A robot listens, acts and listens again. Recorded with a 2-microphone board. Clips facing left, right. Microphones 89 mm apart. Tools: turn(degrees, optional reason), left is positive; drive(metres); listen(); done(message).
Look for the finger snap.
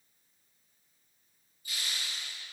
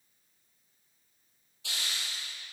listen()
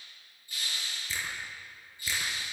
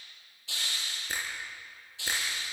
turn(degrees=-50, reason="The finger snap: about 50° right or 130° right.")
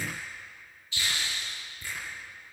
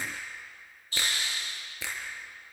turn(degrees=-85, reason="So it is at 85° right.")
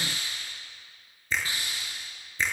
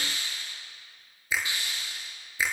turn(degrees=-10, reason="The finger snap is now 10° right.")
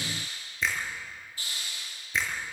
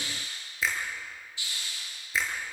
done("Found it: a finger snap, straight ahead.")